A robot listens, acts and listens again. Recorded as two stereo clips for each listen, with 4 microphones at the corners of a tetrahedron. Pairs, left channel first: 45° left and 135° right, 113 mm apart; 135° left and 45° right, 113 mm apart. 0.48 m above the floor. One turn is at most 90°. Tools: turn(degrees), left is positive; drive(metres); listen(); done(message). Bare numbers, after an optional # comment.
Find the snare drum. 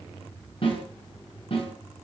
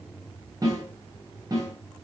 # The snare drum: 10° left.
turn(10)
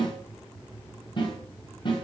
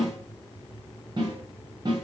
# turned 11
done("Facing the snare drum, over 4 m away.")